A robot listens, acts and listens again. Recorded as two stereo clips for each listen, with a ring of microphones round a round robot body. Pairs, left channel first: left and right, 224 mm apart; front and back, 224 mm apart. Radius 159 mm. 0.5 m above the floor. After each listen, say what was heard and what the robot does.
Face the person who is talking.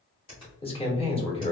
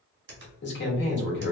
The man speaking: 25° left. Turn 25° left.
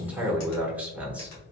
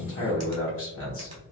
Facing the man speaking.